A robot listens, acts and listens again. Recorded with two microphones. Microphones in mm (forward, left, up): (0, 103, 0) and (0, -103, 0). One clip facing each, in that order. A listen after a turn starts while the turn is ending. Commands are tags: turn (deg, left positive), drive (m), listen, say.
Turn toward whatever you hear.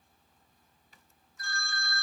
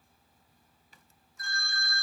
<turn deg="35"/>
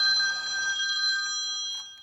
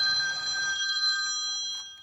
<turn deg="110"/>
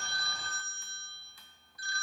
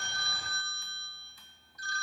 <turn deg="-45"/>
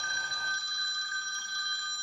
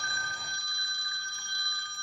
<turn deg="-15"/>
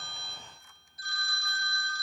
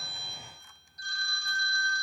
<say>Facing the phone ringing, 2 to 4 m away.</say>